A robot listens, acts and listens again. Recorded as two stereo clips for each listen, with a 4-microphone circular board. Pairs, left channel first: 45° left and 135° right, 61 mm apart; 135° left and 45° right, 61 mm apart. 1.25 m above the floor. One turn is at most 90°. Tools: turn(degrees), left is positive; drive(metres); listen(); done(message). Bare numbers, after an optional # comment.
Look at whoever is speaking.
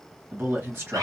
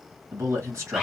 # The man speaking: 85° right.
turn(-85)
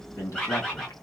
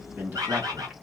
# The man speaking is now 10° left.
turn(10)
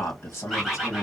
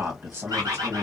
done("Found it: a man speaking, straight ahead.")